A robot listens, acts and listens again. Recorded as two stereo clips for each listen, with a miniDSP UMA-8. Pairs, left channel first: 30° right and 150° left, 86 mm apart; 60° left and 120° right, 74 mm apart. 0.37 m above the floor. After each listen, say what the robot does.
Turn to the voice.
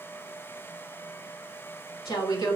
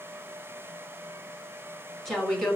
Turn 25° right.
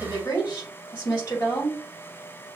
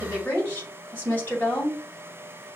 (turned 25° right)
Found it: a woman speaking, straight ahead, 2 to 4 m away.